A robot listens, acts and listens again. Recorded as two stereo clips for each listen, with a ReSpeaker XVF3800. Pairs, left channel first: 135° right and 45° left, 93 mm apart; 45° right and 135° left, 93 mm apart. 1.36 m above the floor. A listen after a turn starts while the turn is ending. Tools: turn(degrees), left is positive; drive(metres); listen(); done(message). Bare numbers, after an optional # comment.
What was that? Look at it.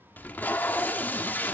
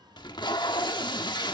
# The tape being pulled: 65° right.
turn(-65)
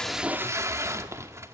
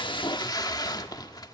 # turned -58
# The tape being pulled is now 10° right.
turn(-10)
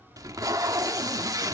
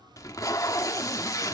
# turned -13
done("Facing the tape being pulled, 1 to 2 m away.")